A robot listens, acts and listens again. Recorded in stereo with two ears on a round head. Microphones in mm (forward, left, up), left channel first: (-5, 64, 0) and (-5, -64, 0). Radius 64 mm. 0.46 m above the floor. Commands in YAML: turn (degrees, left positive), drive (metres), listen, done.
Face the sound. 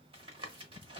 turn: -40
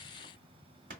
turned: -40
turn: -100
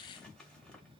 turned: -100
done: "Found it: tapping, straight ahead, 1 to 2 m away."